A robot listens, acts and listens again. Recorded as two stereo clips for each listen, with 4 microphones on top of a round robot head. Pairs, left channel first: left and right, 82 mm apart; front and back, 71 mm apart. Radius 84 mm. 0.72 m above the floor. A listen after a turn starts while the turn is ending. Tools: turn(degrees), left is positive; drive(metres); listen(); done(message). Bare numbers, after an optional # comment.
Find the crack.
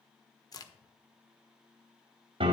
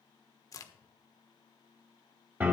# The crack: 45° left.
turn(45)
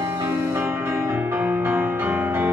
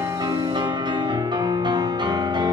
done("Facing where the crack came from. I can't hear it now.")